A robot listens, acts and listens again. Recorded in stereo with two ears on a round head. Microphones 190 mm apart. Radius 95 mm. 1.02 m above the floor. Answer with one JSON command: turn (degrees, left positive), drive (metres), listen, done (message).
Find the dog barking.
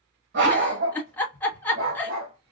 {"turn": -70}
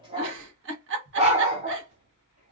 {"turn": -35}
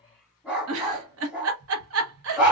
{"done": "Facing the dog barking."}